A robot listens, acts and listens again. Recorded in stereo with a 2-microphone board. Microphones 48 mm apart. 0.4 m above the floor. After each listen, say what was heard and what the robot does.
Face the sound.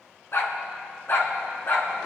The dog barking: about 55° left or 125° left. Turn 55° left.
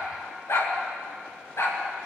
So it is at 75° left. Turn 75° left.
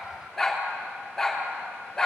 The dog barking is now 10° left. Turn 10° left.
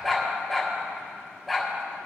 Found it: a dog barking, straight ahead, 2 to 4 m away.